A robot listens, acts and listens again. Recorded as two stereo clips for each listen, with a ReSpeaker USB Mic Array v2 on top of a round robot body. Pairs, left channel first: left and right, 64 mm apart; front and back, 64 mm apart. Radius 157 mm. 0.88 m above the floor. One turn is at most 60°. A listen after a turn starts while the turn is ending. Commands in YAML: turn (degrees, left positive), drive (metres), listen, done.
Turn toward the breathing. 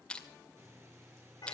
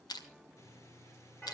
turn: -40
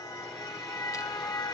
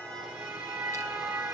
listen: true
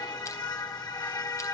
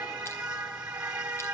listen: true
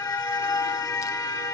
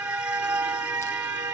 done: "Facing where the breathing came from. I can't hear it now."